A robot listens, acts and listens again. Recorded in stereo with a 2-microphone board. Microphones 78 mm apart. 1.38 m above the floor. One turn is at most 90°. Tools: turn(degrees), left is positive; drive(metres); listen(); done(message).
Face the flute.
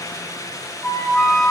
turn(degrees=30)
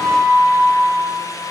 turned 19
turn(degrees=-10)
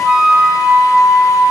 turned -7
done("Facing the flute.")